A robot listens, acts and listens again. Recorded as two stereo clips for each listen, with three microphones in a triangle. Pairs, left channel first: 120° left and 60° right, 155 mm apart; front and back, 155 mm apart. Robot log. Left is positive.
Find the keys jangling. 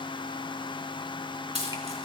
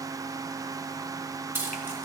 note: The keys jangling: 105° right.
cmd yaw -105
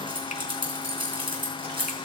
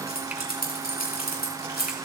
end: Facing the keys jangling.